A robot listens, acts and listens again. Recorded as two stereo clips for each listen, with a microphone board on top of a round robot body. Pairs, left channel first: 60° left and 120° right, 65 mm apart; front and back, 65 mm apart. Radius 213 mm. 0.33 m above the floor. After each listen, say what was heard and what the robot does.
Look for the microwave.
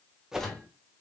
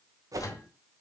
The microwave: 20° right. Turn 20° right.
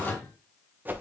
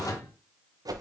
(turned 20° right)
Found it: a microwave, straight ahead, 1 to 2 m away.